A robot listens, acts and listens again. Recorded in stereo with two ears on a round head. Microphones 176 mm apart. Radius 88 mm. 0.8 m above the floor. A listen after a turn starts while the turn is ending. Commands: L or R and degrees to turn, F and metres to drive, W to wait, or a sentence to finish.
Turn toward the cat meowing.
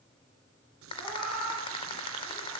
L30
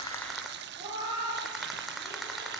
R20
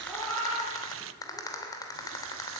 Found it: a cat meowing, straight ahead.